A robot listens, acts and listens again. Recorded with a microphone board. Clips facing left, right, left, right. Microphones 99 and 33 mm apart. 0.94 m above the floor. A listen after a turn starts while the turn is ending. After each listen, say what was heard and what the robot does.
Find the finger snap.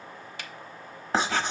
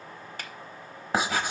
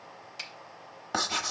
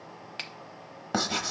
The finger snap: about 45° right or 135° right. Turn 45° right.
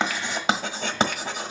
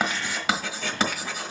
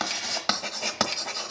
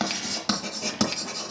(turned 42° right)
Keep listening.
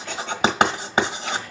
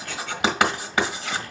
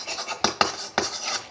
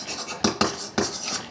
Keep listening.
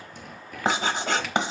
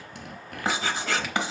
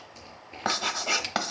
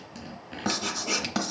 I heard a finger snap, but can't make it out now. It was about 5° right or 95° right.